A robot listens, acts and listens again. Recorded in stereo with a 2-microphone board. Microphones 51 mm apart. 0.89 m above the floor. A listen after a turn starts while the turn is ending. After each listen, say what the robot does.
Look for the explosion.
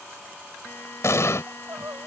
Turn 70° left.
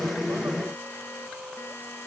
Keep listening.
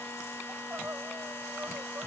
I heard an explosion, but can't make it out now. It was about straight ahead or 40° left.